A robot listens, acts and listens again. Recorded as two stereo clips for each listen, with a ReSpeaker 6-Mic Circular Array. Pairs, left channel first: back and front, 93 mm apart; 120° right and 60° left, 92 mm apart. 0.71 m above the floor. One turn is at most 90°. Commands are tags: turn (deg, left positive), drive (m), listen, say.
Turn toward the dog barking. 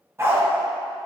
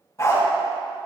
<turn deg="-60"/>
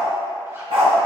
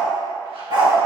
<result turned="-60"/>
<turn deg="20"/>
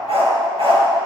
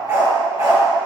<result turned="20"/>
<turn deg="10"/>
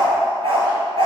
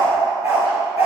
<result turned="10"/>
<say>Found it: a dog barking, straight ahead, 2 to 4 m away.</say>